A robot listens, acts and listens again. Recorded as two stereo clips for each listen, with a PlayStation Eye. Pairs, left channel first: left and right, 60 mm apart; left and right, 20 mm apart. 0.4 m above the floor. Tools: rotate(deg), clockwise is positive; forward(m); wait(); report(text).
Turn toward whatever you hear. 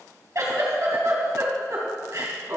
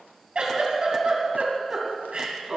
rotate(65)
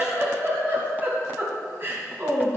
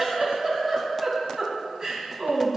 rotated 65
rotate(45)
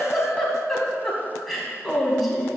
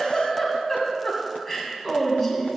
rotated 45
report("Facing the giggle, 2 to 4 m away.")